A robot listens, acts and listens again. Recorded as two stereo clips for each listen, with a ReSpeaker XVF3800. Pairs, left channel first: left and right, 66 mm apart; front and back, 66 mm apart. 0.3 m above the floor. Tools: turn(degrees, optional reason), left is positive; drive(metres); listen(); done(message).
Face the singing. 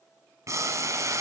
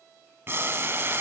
listen()
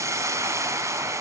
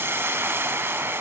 listen()
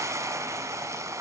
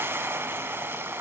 done("I can't make out singing, only boiling.")